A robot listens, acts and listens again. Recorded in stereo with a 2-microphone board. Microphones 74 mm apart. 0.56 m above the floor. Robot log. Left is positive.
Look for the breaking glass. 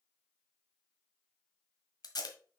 cmd idle
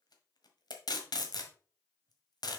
cmd idle
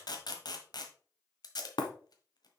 note: The breaking glass: about 70° left or 110° left.
cmd yaw +70
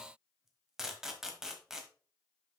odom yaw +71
cmd idle
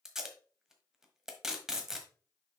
end: I heard breaking glass, but can't make it out now. It was about straight ahead or 40° left.